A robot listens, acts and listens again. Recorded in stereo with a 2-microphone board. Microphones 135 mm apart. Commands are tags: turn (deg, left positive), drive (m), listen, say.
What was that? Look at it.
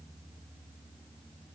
<listen/>
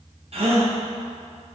<turn deg="-55"/>
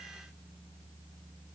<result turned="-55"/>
<listen/>
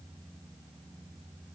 <say>I heard a gasp, but can't make it out now. It was about straight ahead or 70° right.</say>